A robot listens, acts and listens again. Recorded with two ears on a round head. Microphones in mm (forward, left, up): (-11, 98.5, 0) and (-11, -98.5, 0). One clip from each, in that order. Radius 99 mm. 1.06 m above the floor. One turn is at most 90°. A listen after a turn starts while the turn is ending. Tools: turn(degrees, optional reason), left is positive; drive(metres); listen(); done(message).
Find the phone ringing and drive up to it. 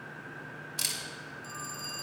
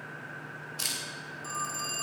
turn(degrees=-30)
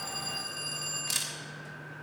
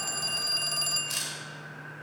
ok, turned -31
turn(degrees=-90, reason="So it is at 145° right.")
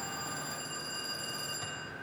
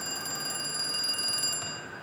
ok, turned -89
turn(degrees=-60, reason="The phone ringing is now 60° right.")
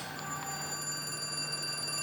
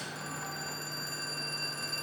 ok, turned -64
turn(degrees=10, reason="The phone ringing is now 10° left.")
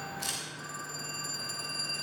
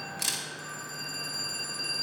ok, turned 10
drive(metres=1.0)
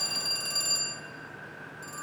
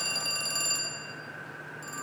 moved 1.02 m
drive(metres=1.0)
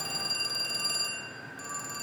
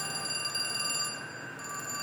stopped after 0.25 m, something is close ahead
turn(degrees=10, reason="The phone ringing is now 10° left.")
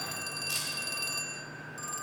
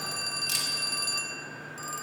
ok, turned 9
done("Arrived at the phone ringing, straight ahead.")